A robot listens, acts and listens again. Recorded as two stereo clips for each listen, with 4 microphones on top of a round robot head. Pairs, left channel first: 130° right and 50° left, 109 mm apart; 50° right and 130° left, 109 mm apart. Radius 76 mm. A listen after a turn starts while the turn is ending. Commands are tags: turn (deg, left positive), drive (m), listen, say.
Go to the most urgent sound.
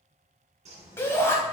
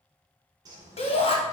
<turn deg="-65"/>
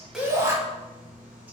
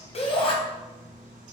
<turn deg="-15"/>
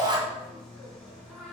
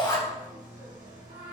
<drive m="1.0"/>
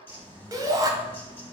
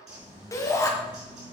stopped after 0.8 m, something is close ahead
<say>Arrived at the shout, straight ahead.</say>